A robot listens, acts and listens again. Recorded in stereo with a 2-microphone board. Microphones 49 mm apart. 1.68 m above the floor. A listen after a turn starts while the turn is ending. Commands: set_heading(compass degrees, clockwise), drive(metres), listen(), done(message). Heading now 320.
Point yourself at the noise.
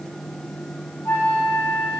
set_heading(275)
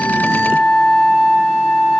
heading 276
done("Found it: a flute, straight ahead.")